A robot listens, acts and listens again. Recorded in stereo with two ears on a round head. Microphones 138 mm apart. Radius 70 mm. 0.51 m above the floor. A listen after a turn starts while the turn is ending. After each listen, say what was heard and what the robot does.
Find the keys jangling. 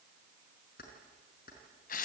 The keys jangling: about 60° left or 120° left. Turn 60° left.
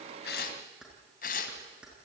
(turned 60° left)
Found it: keys jangling, straight ahead.